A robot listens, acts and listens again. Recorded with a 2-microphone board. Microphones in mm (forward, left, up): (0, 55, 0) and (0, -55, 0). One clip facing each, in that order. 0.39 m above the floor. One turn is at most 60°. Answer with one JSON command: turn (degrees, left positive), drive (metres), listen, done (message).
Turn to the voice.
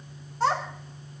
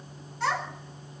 {"turn": 35}
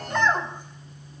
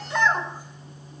{"done": "Facing the child speaking, 2 to 4 m away."}